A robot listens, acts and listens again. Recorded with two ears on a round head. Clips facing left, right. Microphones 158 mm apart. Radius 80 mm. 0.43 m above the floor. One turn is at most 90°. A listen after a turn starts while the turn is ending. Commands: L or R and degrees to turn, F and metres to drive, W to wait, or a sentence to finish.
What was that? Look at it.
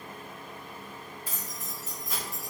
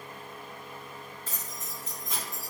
L30
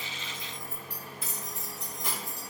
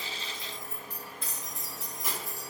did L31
R30
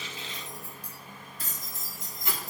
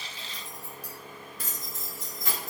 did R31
R90
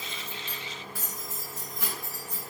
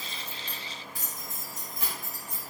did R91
R15
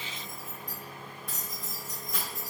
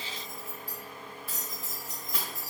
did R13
Found it: keys jangling, straight ahead, 1 to 2 m away.